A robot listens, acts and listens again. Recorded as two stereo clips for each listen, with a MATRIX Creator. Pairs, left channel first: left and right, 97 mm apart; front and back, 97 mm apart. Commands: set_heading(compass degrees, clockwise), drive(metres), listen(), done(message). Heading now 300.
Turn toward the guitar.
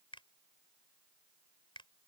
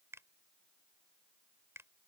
listen()
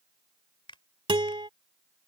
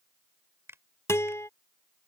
set_heading(0)
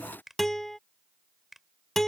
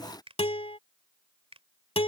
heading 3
done("Found it: a guitar, straight ahead.")